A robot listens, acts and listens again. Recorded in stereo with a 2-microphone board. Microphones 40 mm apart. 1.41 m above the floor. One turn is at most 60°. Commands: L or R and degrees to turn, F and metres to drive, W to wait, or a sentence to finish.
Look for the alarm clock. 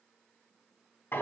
W
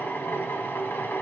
W
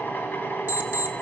R55
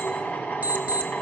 R55
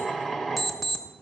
Facing the alarm clock.